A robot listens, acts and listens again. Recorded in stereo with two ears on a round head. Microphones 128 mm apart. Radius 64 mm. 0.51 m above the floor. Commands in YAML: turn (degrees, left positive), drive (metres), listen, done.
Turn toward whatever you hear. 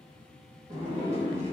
turn: -50
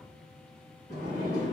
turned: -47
turn: -70
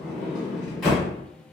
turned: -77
done: "Facing the sliding door."